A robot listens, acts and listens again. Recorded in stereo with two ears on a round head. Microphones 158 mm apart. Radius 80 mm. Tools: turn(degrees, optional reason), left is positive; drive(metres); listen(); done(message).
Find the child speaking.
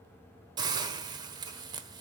listen()
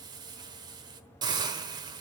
listen()
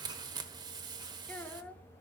turn(degrees=30)
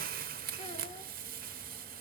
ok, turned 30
listen()
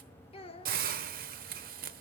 turn(degrees=140, reason="So it is at 140° left.")
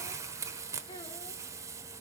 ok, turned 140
listen()
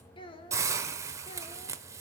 turn(degrees=35, reason="The child speaking is now 35° left.")
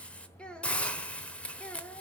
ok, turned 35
done("Found it: a child speaking, straight ahead.")